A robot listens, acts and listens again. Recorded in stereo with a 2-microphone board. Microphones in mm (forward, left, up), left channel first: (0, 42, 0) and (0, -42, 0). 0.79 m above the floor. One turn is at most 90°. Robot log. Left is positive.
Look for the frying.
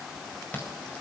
cmd idle
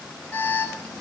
cmd idle
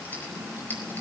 end: I can't make out frying, only an alarm.